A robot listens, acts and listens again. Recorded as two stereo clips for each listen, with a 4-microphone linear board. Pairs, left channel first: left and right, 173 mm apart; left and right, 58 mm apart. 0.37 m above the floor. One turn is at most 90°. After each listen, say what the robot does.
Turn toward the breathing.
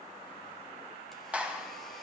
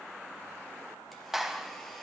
Keep listening.
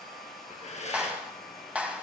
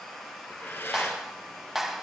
Turn 45° left.
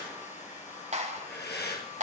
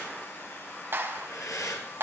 Turn 90° left.
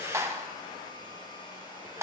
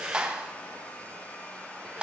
Turn 15° right.
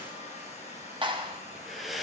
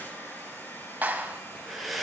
Facing the breathing, 2 to 4 m away.